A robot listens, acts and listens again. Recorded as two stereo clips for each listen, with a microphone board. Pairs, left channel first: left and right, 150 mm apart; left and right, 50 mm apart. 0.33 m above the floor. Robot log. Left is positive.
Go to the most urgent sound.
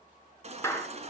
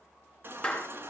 note: The baby crying: about 45° right or 135° right.
cmd yaw -45
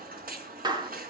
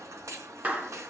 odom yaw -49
note: So it is at 85° right.
cmd yaw -85
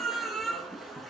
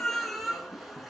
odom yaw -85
cmd fwd 1.0
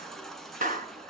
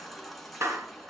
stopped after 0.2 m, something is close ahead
end: Blocked. The baby crying is further on, straight ahead.